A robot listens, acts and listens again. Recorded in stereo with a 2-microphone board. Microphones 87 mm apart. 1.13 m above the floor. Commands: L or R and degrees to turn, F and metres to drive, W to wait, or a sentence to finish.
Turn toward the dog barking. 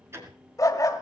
L40
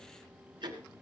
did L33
W
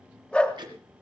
L15
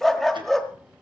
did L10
Facing the dog barking.